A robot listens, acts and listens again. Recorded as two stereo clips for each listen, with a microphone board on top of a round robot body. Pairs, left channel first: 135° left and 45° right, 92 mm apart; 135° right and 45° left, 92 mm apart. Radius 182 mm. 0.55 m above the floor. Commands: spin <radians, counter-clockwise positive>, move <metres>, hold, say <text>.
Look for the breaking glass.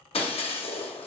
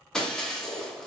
spin 2.44
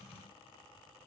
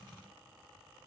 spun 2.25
spin 0.17
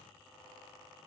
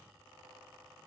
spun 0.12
say I heard breaking glass from this way, but can't make it out now.